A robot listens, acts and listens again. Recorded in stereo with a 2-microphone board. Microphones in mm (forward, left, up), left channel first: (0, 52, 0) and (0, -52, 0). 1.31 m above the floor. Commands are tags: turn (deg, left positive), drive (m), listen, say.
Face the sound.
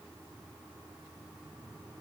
<listen/>
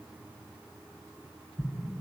<turn deg="-15"/>
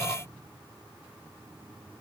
<listen/>
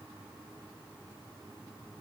<say>I heard an explosion, but can't make it out now. It was about straight ahead or 150° right.</say>